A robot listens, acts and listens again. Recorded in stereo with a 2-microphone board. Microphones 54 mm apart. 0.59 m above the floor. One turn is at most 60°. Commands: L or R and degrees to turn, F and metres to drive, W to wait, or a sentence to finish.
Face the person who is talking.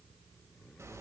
W
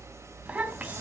R25
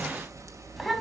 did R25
Facing the child speaking.